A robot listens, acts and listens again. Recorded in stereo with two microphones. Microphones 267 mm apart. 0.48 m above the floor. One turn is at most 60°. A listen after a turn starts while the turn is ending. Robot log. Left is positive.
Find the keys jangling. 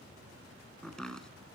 cmd idle
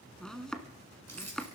note: The keys jangling: about 70° right or 110° right.
cmd yaw -60
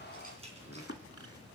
cmd idle
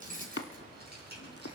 note: So it is at 40° right.
cmd yaw -40
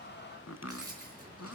note: The keys jangling is now 15° right.
cmd yaw -15
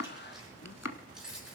end: Found it: keys jangling, straight ahead.